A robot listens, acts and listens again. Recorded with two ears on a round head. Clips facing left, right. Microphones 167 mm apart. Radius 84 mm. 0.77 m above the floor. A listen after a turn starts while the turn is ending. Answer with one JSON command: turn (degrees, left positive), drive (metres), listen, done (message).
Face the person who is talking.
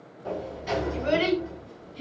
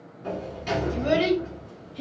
{"turn": -60}
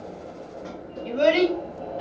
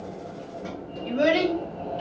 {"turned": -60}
{"done": "Facing the child speaking."}